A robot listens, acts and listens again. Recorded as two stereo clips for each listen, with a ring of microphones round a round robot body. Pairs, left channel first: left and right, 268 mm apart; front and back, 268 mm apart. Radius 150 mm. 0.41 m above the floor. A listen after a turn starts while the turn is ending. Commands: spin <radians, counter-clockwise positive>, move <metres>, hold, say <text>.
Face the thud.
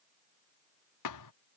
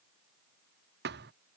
spin 2.09
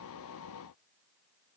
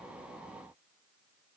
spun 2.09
say I heard a thud from this way, but can't make it out now.